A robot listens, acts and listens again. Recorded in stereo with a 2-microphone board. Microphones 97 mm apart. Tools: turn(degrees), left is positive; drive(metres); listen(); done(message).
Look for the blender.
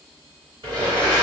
turn(degrees=-50)
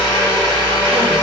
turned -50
turn(degrees=-65)
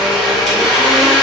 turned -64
done("Found it: a blender, straight ahead, 1 to 2 m away.")